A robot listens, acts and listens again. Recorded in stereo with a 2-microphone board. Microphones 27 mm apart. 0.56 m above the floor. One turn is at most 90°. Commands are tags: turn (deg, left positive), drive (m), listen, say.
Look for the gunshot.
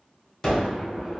<turn deg="20"/>
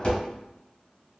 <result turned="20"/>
<turn deg="90"/>
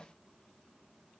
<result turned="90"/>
<turn deg="45"/>
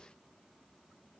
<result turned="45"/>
<say>Facing where the gunshot came from. I can't hear it now.</say>